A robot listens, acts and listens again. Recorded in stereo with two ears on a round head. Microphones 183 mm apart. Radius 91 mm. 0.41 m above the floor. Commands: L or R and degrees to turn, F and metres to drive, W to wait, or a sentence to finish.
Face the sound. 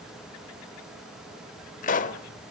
L40
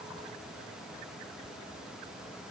W
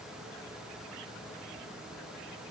I heard a pop, but can't make it out now. It was about straight ahead or 100° left.